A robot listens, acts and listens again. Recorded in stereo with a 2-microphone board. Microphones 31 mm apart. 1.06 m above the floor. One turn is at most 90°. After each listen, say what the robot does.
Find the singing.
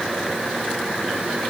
Keep listening.
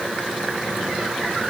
Keep listening.
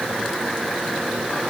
I can't make out singing.